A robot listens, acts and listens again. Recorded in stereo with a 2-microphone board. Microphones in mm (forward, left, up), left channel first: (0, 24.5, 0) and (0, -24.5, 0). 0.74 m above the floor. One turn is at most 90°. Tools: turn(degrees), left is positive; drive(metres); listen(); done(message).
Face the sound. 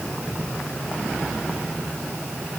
listen()
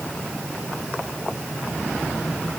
listen()
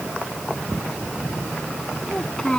turn(degrees=20)
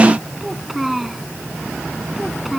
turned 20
done("Facing the child speaking.")